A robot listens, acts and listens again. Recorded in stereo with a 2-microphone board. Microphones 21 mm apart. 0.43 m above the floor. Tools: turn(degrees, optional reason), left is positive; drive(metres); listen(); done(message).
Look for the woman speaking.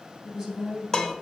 turn(degrees=-40, reason="The woman speaking: about 40° right or 140° right.")
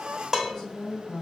turn(degrees=-10, reason="So it is at 10° right.")
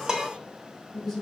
done("Found it: a woman speaking, straight ahead.")